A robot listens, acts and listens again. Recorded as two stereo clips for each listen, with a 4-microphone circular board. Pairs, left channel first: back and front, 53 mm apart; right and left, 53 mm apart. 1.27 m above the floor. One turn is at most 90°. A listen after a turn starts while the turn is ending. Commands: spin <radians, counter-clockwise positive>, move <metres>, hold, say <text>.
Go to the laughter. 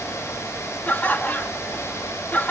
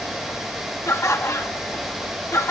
spin -1.57
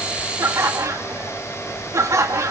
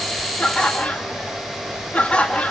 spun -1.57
spin -0.44
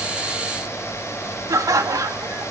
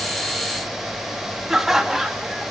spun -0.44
move 1.0
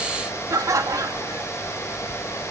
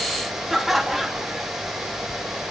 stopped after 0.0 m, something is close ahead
say Blocked. The laughter is further on, straight ahead.